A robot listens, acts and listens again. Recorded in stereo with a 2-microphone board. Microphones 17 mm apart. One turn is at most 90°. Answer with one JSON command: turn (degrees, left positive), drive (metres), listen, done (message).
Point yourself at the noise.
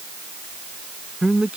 {"turn": -90}
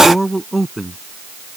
{"done": "Found it: a man speaking, straight ahead."}